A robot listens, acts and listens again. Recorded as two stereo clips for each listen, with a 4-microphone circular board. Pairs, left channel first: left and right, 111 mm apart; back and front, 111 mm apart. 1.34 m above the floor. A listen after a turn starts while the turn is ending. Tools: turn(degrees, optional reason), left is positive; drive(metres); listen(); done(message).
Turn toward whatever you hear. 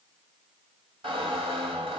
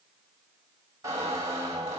turn(degrees=-60, reason="The squeak: 60° right.")
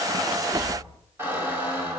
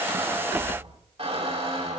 turn(degrees=-20, reason="The squeak is now 20° right.")
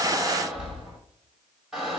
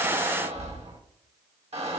done("Found it: a squeak, straight ahead.")